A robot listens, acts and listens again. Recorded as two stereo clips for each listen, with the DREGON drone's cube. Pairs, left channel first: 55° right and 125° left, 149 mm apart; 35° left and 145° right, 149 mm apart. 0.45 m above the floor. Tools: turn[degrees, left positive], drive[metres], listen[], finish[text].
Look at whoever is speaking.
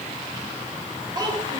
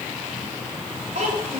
Thought: The child speaking: straight behind.
Action: turn[180]
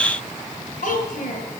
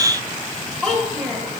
Thought: The child speaking is now 55° right.
Action: turn[-55]
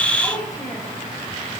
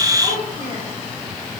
Thought: The child speaking is now 10° left.
Action: turn[10]
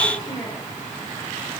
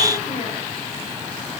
Action: listen[]
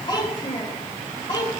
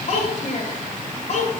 Action: finish[Found it: a child speaking, straight ahead.]